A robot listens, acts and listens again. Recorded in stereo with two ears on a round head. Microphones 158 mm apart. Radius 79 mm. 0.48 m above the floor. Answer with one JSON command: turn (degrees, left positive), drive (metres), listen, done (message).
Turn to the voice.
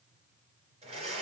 {"listen": true}
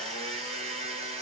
{"listen": true}
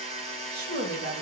{"turn": -55}
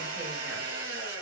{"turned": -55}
{"listen": true}
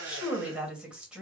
{"done": "Facing the woman speaking."}